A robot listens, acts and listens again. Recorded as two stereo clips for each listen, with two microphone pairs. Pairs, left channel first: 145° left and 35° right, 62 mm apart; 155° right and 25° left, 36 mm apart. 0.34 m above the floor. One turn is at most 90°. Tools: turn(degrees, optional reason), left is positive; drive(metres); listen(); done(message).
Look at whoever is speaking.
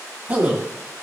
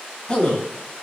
turn(degrees=-90, reason="The man speaking: 100° right.")
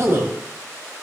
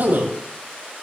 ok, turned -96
done("Found it: a man speaking, straight ahead.")